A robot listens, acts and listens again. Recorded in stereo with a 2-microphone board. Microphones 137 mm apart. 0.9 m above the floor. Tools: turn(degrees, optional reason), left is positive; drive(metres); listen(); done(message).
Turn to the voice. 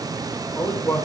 turn(degrees=30)
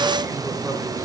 listen()
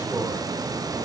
listen()
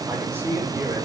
done("I heard a man speaking, but can't make it out now. It was about 20° right or 140° left.")